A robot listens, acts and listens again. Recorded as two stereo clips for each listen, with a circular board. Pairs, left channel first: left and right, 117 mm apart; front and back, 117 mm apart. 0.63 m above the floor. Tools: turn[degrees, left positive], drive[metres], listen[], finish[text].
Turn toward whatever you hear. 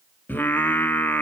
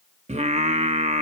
Thought: The singing: 165° left.
Action: turn[165]
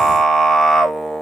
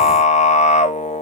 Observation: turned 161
Action: finish[Facing the singing, 1 to 2 m away.]